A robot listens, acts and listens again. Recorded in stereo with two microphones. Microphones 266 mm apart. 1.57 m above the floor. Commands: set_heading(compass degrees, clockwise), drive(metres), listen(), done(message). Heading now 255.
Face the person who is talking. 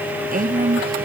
set_heading(285)
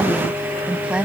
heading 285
done("Found it: a woman speaking, straight ahead.")